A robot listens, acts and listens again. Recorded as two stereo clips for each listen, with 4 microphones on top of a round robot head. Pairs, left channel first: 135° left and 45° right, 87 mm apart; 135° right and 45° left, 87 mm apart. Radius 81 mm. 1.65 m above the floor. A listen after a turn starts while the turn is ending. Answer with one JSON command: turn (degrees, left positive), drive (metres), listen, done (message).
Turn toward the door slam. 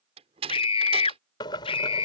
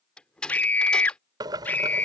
{"turn": -55}
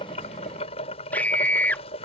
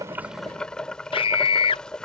{"done": "Facing where the door slam came from. I can't hear it now."}